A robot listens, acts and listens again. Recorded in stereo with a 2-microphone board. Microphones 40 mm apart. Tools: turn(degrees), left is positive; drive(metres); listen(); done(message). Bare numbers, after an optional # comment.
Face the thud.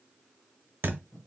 # The thud: about 65° right or 115° right.
turn(-65)
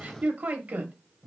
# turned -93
listen()
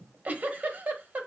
done("I heard a thud, but can't make it out now. It was about 25° right or 30° left.")